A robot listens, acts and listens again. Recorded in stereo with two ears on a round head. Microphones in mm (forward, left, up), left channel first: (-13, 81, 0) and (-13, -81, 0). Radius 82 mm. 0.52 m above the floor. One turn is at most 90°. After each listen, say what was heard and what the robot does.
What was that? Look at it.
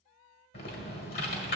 The typing on a keyboard: about 60° left or 120° left. Turn 60° left.
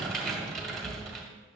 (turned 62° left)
Facing the typing on a keyboard, 1 to 2 m away.